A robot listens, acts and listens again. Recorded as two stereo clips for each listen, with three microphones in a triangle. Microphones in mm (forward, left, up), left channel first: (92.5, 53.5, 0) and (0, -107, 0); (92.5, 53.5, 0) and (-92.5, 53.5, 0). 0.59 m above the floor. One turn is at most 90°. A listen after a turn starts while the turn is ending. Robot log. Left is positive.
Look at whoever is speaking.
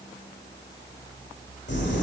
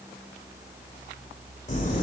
cmd idle
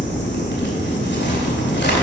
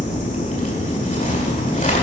cmd idle
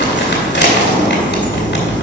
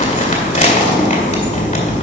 end: I can't make out anyone speaking, only crumpling.